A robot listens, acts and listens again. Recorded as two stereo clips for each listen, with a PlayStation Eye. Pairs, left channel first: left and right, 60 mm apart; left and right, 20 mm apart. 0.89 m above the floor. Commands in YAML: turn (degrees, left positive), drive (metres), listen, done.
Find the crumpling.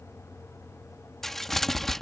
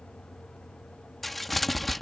turn: 30
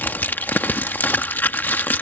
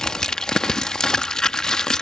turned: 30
turn: 145
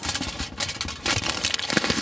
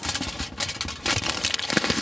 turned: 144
done: "Found it: crumpling, straight ahead."